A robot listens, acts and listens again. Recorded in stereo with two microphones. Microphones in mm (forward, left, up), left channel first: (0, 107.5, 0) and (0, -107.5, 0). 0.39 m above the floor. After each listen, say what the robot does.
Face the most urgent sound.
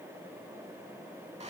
Keep listening.
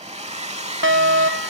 Turn 70° right.
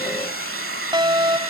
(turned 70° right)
Turn 20° right.
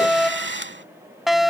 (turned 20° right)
Found it: a fire alarm, straight ahead.